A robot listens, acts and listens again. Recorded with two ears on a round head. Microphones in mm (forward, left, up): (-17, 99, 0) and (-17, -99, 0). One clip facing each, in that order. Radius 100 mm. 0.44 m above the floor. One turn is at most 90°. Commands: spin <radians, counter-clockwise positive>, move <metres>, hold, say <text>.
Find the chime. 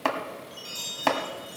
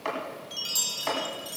spin -0.96
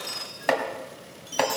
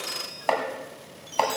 say Found it: a chime, straight ahead, 1 to 2 m away.